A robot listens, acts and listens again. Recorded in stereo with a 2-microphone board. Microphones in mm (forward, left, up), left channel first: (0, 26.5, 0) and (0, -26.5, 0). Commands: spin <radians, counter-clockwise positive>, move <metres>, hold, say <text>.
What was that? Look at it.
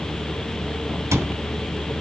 spin -1.57
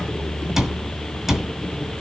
spin -0.17
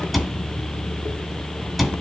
say Facing the cupboard door.